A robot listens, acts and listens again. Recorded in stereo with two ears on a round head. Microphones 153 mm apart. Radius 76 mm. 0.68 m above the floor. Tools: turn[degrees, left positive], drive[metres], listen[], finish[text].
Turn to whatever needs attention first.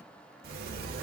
Action: listen[]
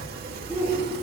Action: turn[-30]
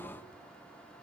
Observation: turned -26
Action: listen[]
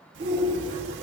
Thought: So it is at 140° right.
Action: turn[-140]
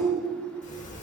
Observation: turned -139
Action: finish[Facing the shout, 2 to 4 m away.]